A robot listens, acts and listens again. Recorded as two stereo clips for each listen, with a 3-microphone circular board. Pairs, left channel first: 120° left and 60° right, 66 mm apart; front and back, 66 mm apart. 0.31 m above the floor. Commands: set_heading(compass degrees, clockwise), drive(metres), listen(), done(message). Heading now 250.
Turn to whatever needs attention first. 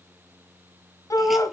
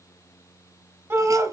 set_heading(100)
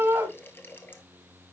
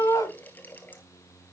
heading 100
done("Facing the shout.")